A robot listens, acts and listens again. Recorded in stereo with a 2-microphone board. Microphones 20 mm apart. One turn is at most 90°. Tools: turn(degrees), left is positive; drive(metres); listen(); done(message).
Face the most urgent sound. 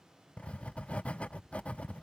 listen()
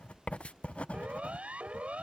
turn(degrees=-90)
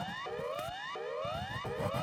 turn(degrees=10)
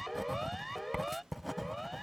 done("Found it: a siren, straight ahead.")